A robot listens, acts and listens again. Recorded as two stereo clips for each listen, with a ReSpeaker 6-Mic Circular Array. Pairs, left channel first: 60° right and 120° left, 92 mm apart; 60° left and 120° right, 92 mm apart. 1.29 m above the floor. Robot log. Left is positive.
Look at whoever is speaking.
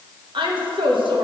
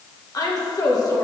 note: The woman speaking: 105° left.
cmd yaw +105
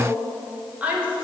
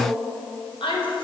note: The woman speaking is now 45° left.
cmd yaw +45
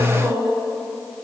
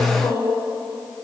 end: Facing the woman speaking.